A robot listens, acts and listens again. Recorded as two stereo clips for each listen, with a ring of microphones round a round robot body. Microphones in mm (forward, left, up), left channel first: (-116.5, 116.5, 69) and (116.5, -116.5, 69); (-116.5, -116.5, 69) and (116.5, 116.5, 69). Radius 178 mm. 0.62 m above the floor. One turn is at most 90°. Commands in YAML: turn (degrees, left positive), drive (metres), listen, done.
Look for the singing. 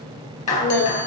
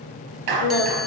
turn: -90
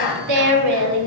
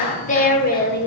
turn: -80
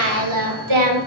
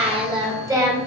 turn: -35
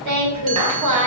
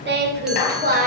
turn: -20
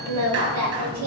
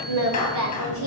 done: "Found it: singing, straight ahead, 2 to 4 m away."